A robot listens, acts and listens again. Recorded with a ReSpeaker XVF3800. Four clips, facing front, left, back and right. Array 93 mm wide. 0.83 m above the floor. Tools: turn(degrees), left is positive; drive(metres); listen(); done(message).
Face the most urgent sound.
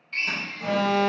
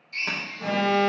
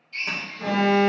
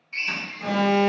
turn(degrees=160)
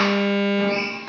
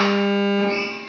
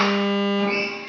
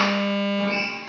turn(degrees=40)
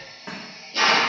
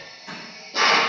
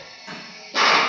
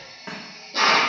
listen()
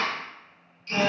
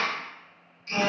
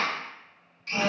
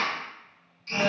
done("Facing the alarm, 1 to 2 m away.")